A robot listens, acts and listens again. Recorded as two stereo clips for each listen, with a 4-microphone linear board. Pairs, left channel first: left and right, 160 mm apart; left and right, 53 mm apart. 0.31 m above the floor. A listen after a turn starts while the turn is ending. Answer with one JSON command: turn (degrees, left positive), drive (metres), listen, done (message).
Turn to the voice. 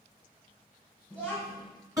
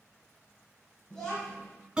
{"turn": 30}
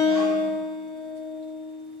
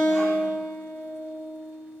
{"listen": true}
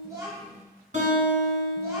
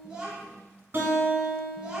{"turn": -20}
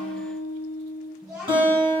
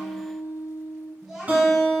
{"done": "Facing the child speaking."}